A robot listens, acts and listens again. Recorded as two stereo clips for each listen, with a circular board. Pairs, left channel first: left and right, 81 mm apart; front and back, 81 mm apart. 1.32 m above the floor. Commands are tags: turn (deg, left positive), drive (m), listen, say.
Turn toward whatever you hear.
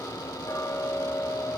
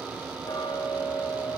<turn deg="35"/>
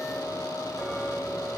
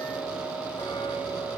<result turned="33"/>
<say>Facing the ticking, over 4 m away.</say>